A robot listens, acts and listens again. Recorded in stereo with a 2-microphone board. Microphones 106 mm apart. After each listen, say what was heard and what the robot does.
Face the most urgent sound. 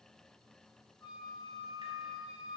Keep listening.
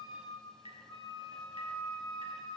Keep listening.
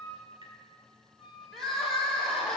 Turn 30° left.
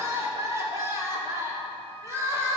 So it is at 30° right. Turn 30° right.
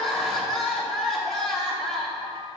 Facing the crying.